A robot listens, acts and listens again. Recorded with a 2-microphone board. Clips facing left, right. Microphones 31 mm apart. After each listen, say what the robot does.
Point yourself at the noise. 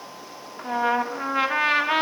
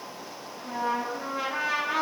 Turn 60° left.
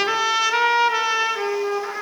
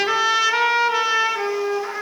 Found it: a trumpet, straight ahead.